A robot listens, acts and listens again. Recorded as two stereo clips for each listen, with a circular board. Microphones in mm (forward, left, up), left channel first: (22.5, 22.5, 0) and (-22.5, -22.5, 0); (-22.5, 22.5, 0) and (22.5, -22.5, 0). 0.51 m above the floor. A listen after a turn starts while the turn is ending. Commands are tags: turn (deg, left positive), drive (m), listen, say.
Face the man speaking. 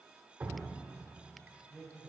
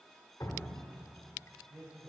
<turn deg="-35"/>
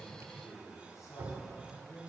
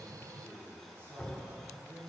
<turn deg="10"/>
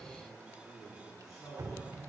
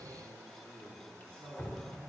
<turn deg="10"/>
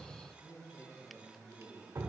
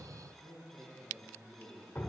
<say>Found it: a man speaking, straight ahead.</say>